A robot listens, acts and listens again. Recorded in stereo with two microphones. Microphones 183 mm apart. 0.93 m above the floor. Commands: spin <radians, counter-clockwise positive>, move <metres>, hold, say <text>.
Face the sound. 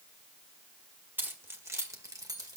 spin -0.35
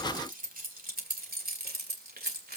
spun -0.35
spin -2.09
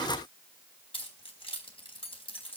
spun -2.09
spin 0.52
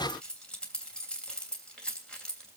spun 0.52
say Facing the keys jangling.